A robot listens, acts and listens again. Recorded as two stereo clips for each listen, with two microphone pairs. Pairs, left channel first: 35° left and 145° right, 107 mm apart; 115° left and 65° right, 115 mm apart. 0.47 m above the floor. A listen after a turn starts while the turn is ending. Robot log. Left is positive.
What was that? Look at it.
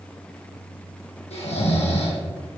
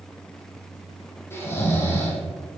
note: The snoring: 45° left.
cmd yaw +45
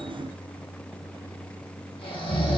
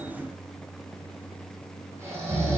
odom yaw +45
end: Found it: snoring, straight ahead, 2 to 4 m away.